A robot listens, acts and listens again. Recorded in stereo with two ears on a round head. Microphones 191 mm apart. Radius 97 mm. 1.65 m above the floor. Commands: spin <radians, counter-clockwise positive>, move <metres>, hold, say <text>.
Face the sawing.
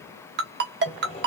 spin 0.44
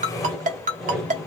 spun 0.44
say Facing the sawing.